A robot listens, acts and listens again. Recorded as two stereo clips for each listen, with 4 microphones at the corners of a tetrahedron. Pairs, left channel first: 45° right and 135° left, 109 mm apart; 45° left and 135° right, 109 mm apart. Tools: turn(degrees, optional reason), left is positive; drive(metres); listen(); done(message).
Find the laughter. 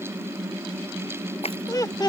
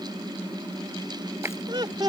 turn(degrees=-90, reason="The laughter: 90° right.")
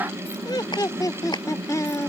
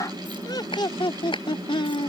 turn(degrees=15, reason="The laughter is now 15° left.")
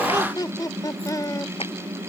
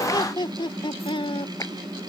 turn(degrees=10, reason="The laughter is now 10° left.")
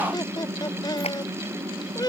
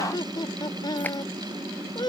done("Found it: laughter, straight ahead.")